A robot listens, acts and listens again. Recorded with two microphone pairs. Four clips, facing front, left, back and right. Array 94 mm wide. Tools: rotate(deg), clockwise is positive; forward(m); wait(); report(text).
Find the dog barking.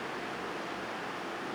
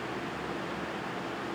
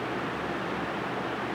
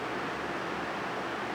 wait()
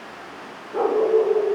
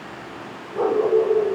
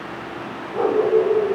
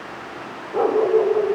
rotate(70)
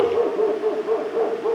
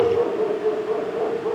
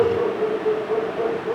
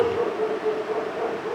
rotate(-15)
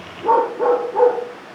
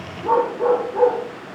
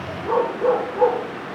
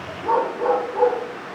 report("Facing the dog barking, over 4 m away.")